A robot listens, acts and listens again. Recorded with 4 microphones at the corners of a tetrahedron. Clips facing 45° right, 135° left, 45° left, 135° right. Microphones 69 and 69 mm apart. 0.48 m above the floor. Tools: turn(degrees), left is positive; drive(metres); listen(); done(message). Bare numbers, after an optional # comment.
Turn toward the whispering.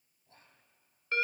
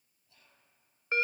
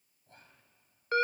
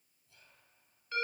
done("Found it: whispering, straight ahead, 2 to 4 m away.")